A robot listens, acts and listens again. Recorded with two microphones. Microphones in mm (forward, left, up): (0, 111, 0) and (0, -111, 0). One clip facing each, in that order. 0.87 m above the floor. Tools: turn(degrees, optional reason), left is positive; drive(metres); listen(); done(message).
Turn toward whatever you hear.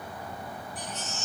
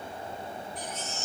turn(degrees=-30)
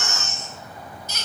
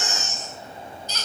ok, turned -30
turn(degrees=20, reason="So it is at 20° left.")
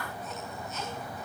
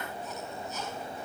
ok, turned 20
listen()
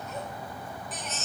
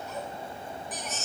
done("Facing the baby crying, over 4 m away.")